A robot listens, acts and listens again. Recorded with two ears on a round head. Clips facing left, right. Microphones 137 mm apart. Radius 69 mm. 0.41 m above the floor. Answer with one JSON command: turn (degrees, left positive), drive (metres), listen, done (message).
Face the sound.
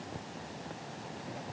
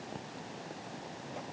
{"listen": true}
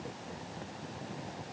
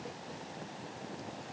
{"listen": true}
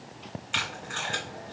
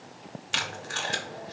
{"turn": -50}
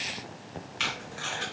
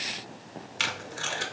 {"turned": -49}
{"turn": -75}
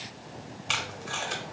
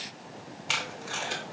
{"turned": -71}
{"done": "Facing the tape being pulled."}